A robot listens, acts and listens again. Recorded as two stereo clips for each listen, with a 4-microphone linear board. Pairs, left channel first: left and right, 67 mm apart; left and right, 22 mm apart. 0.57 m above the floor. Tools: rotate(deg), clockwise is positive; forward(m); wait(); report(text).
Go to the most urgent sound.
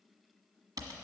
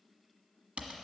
wait()
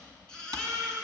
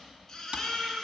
rotate(-30)
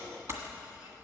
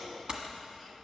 wait()
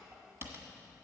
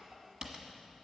wait()
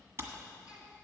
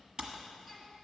report("I heard a baby crying, but can't make it out now. It was about 20° right or 140° left. I did not reach it.")